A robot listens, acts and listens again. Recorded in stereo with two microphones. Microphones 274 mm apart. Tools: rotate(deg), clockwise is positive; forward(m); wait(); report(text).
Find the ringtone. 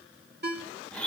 rotate(40)
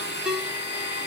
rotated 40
report("Found it: a ringtone, straight ahead.")